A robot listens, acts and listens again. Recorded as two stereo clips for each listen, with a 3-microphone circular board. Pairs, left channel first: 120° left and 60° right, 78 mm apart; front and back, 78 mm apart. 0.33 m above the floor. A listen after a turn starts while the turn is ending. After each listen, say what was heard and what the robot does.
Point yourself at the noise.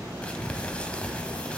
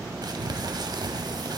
The crumpling: 165° right. Turn 165° right.
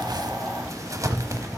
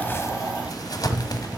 The crumpling is now 25° right. Turn 25° right.
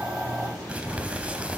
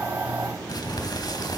The crumpling is now 10° left. Turn 10° left.
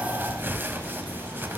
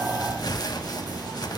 Found it: crumpling, straight ahead.